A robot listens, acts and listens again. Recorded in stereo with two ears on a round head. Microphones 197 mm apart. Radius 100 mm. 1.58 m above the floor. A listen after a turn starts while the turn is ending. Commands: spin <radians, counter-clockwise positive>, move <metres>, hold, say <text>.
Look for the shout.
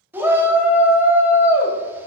spin -0.52
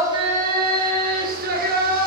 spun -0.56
spin -2.36
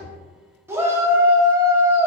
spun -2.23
spin -0.17
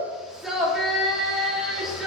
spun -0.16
say Facing the shout, under 1 m away.